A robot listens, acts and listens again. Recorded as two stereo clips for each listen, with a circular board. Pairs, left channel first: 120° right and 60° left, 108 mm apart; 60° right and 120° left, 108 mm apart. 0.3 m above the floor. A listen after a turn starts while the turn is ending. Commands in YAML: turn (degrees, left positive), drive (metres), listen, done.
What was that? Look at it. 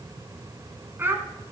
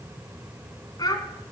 turn: -10
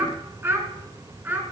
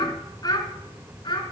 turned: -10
turn: -15
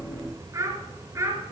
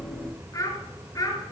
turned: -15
done: "Facing the child speaking, 2 to 4 m away."